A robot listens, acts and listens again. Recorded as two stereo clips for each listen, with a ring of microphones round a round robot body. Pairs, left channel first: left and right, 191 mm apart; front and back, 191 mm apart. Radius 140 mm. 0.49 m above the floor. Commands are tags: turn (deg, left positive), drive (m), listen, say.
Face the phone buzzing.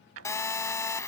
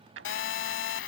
<turn deg="15"/>
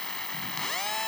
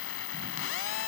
<say>Facing the phone buzzing.</say>